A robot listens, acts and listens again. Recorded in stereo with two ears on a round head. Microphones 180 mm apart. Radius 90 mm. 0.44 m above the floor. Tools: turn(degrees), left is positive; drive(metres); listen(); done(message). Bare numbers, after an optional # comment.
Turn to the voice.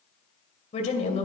# The woman speaking: about 35° left or 145° left.
turn(35)
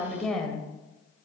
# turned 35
done("Facing the woman speaking.")